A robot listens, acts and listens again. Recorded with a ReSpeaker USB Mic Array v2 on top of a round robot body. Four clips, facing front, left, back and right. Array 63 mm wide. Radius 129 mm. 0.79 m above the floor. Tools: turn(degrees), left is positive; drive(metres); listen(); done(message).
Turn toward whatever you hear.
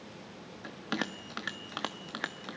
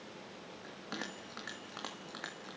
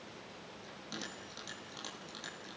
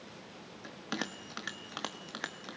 turn(degrees=-20)
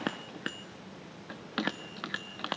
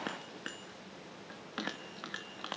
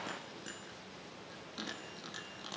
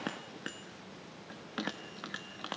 done("Facing the bell, 1 to 2 m away.")